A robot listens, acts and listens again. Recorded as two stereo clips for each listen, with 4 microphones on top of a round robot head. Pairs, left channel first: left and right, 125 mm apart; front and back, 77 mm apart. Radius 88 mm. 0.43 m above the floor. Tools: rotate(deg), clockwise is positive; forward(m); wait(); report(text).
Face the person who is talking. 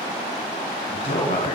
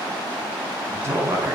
rotate(-125)
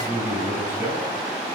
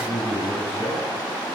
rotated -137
rotate(15)
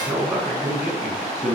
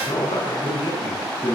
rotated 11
rotate(10)
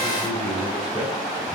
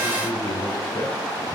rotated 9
report("Facing the man speaking, over 4 m away.")